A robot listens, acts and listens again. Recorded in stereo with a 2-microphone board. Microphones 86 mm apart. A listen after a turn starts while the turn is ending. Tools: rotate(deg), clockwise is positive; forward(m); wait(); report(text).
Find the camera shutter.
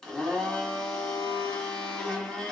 wait()
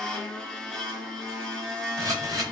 rotate(40)
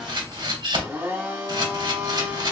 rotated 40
rotate(95)
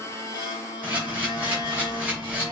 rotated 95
rotate(20)
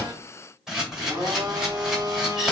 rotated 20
report("Found it: a camera shutter, straight ahead, 2 to 4 m away.")